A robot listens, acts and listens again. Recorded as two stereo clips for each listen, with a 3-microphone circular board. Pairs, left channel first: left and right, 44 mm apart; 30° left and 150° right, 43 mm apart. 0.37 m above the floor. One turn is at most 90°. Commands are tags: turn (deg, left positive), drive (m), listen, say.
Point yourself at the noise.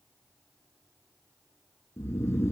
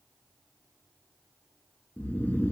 <turn deg="85"/>
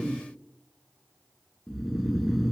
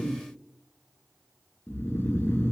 <say>Found it: snoring, straight ahead.</say>